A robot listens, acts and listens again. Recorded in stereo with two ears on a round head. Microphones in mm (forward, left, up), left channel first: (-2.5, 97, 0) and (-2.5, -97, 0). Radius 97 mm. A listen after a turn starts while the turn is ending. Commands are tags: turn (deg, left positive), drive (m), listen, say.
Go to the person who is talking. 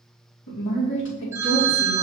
<turn deg="60"/>
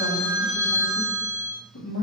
<turn deg="60"/>
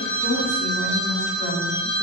<listen/>
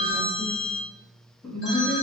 <drive m="1.0"/>
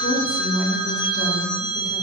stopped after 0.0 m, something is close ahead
<say>Something is in my way. I am facing the woman speaking but have not reached it.</say>